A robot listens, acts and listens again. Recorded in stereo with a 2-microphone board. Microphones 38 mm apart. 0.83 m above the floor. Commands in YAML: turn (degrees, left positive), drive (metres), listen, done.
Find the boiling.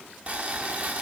turn: -35
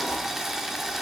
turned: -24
turn: -10
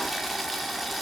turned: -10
done: "Facing the boiling, under 1 m away."